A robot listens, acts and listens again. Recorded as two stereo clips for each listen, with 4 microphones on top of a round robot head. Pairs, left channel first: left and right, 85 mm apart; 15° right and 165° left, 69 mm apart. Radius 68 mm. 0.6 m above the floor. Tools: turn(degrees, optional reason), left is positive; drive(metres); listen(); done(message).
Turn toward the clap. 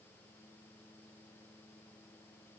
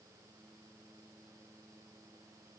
listen()
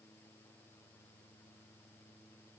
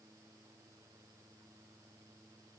listen()
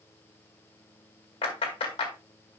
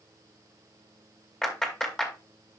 turn(degrees=65, reason="The clap: 65° left.")
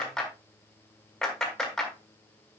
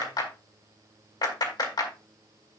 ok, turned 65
done("Found it: a clap, straight ahead, 2 to 4 m away.")